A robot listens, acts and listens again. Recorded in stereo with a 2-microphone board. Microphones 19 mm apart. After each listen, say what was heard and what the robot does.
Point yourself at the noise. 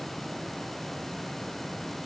Keep listening.
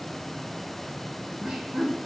The laughter: about 65° right or 115° right. Turn 65° right.
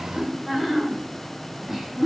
So it is at 25° right. Turn 25° right.
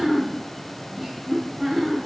The laughter is now 15° right. Turn 15° right.
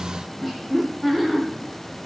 Facing the laughter, 2 to 4 m away.